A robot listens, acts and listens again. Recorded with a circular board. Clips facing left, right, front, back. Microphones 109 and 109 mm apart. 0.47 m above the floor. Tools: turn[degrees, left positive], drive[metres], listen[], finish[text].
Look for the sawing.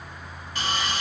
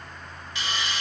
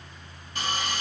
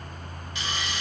Thought: The sawing: 45° left.
Action: turn[45]
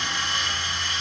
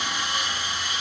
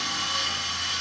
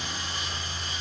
Thought: The sawing is now 10° right.
Action: turn[-10]
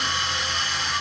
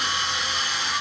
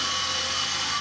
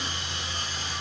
Action: finish[Found it: sawing, straight ahead.]